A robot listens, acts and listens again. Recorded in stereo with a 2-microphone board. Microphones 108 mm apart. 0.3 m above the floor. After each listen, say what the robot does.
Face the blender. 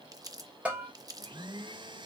Turn 45° right.
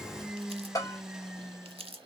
Facing the blender, 1 to 2 m away.